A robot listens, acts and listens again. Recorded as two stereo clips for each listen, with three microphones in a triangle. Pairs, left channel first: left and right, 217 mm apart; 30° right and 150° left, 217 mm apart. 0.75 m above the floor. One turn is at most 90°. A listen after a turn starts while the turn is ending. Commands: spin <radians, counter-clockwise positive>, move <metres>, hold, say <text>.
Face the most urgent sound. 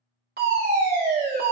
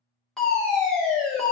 spin -1.57
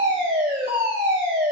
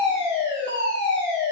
spin -0.96
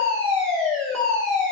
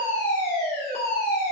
say Facing the fire alarm.